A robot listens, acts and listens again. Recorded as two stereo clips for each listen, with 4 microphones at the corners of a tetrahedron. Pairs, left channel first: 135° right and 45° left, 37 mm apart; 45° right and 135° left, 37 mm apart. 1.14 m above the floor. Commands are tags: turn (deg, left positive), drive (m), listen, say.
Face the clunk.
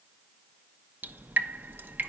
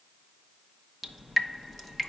<listen/>
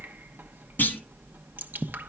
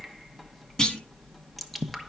<turn deg="-110"/>
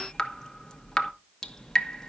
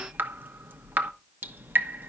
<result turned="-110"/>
<say>Facing where the clunk came from. I can't hear it now.</say>